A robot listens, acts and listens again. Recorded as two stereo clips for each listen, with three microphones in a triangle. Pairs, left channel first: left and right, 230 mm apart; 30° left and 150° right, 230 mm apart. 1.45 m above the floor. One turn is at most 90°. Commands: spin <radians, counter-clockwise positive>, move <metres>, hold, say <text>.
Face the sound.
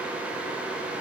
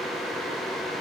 hold
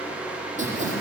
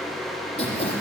spin -0.61
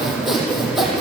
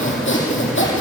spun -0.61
say Found it: sawing, straight ahead.